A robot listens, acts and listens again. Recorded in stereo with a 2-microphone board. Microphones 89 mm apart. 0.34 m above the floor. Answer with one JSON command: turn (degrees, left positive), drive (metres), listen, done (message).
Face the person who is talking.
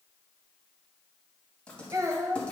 {"turn": -40}
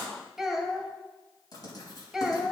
{"done": "Found it: a child speaking, straight ahead, 1 to 2 m away."}